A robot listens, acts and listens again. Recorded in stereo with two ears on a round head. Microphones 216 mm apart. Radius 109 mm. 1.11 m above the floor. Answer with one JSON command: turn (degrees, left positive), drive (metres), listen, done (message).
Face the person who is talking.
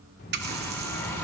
{"turn": 40}
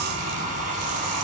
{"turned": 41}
{"listen": true}
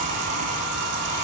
{"listen": true}
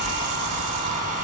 {"turn": 95}
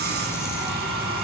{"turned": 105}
{"turn": -10}
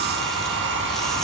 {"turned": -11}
{"listen": true}
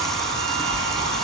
{"done": "Facing the child speaking, 2 to 4 m away."}